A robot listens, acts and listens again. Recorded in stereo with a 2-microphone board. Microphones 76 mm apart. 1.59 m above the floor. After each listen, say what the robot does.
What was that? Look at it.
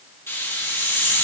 Turn 35° left.
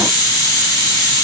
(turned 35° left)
Turn 110° left.
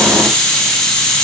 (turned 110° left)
Turn 10° left.
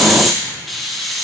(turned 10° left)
Facing the hiss.